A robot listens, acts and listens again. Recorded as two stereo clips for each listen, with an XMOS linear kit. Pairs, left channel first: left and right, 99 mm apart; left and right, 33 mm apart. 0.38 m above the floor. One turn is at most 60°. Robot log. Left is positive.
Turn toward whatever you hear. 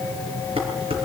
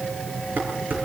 cmd yaw -60
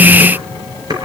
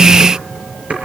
note: So it is at 40° right.
cmd yaw -40
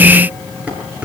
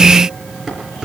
note: The dishes clattering is now 15° right.
cmd yaw -15
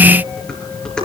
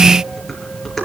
note: The dishes clattering is now 10° left.
cmd yaw +10
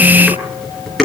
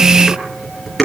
end: Found it: dishes clattering, straight ahead, over 4 m away.